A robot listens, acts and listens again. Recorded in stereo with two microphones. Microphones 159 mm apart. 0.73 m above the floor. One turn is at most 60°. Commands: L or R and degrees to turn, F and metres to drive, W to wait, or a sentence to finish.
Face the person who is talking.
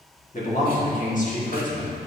L50
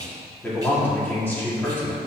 L15
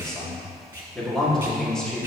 Facing the man speaking, 1 to 2 m away.